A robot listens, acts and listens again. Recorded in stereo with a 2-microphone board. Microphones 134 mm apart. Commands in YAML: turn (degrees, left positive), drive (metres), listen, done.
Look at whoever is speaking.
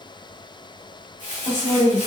turn: 70
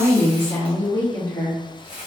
turn: 20
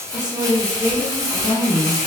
turn: 25
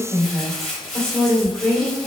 done: "Found it: a woman speaking, straight ahead, 2 to 4 m away."